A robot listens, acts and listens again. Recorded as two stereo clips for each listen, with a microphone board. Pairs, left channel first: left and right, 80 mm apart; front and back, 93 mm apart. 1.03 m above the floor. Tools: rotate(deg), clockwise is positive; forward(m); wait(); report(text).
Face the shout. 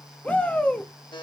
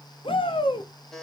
rotate(-15)
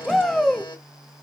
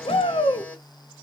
report("Found it: a shout, straight ahead, 1 to 2 m away.")